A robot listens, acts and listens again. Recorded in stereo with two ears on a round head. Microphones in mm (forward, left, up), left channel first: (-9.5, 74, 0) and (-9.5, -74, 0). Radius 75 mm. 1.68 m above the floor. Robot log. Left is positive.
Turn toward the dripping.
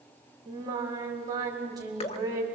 note: The dripping: about 40° left or 140° left.
cmd yaw +40
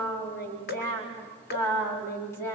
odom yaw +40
note: So it is at 95° left.
cmd yaw +95
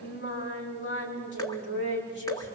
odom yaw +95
note: The dripping is now 25° left.
cmd yaw +25
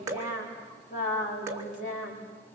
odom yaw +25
note: The dripping is now 20° right.
cmd yaw -20
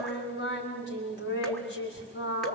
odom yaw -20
cmd idle
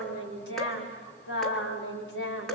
end: Facing the dripping, 2 to 4 m away.